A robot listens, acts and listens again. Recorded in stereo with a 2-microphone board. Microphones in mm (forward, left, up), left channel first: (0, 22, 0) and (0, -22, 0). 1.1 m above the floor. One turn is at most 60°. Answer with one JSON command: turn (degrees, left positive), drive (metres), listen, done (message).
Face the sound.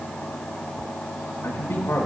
{"turn": 60}
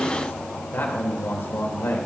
{"turn": 60}
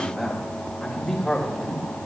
{"turn": 10}
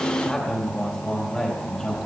{"turn": 10}
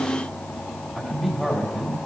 {"done": "Facing the man speaking."}